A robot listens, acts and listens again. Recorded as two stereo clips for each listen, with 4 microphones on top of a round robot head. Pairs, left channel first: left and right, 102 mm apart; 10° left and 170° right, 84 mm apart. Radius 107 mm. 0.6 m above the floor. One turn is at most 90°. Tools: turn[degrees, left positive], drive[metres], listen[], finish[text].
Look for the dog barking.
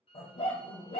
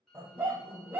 Thought: The dog barking: 130° left.
Action: turn[90]
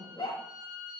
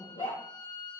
Thought: The dog barking is now 35° left.
Action: turn[35]
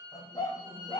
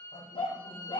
Thought: The dog barking is now 35° left.
Action: turn[35]
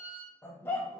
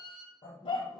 Thought: The dog barking is now 20° left.
Action: turn[20]
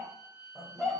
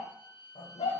Action: finish[Found it: a dog barking, straight ahead.]